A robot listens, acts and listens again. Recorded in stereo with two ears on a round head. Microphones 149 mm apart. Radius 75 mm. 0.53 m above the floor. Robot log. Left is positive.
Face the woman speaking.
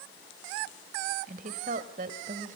note: The woman speaking: about 50° right or 130° right.
cmd yaw -50
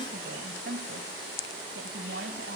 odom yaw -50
note: So it is at 80° right.
cmd yaw -80
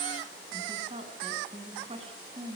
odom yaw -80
note: The woman speaking is now 35° right.
cmd yaw -35
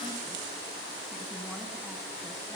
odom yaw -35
cmd idle
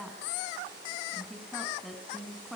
end: Found it: a woman speaking, straight ahead, over 4 m away.